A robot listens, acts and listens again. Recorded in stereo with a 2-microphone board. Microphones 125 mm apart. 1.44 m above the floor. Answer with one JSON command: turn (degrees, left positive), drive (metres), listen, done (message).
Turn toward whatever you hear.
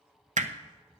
{"turn": -90}
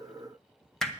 {"done": "Found it: hammering, straight ahead, under 1 m away."}